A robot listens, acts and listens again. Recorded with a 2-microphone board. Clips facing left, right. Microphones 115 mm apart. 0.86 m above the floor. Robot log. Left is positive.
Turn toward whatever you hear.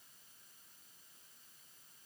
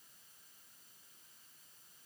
cmd idle
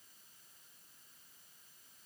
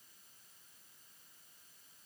cmd idle
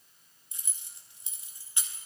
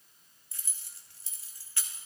note: The keys jangling: about 20° left or 160° left.
cmd yaw +20
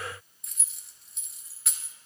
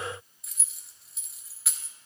end: Facing the keys jangling, under 1 m away.